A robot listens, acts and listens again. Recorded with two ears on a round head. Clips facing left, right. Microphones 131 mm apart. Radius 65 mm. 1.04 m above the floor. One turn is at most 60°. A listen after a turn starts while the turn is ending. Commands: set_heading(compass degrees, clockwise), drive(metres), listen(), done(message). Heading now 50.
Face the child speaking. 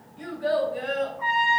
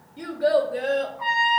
set_heading(110)
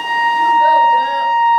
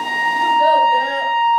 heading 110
set_heading(140)
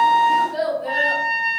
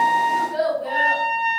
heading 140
done("Found it: a child speaking, straight ahead.")